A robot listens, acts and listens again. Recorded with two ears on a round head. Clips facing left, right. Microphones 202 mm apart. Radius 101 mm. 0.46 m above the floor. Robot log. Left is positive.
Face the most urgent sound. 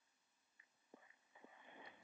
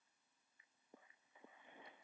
cmd idle
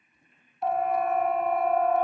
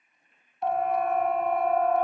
cmd yaw +30
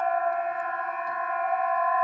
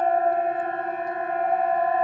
note: So it is at 30° right.
cmd yaw -30
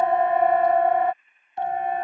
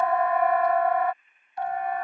note: The siren is now 25° left.
cmd yaw +25
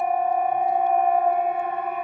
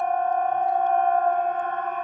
note: The siren is now 10° left.
cmd yaw +10
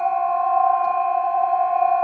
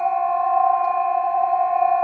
end: Facing the siren.